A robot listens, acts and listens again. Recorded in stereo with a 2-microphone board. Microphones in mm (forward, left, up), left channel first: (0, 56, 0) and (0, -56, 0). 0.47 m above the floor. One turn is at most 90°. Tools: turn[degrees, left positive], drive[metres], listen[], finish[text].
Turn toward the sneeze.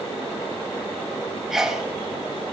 Action: turn[-30]
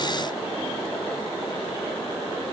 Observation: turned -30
Action: listen[]
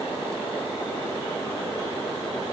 Action: finish[I heard a sneeze, but can't make it out now. It was about 25° left or 145° right.]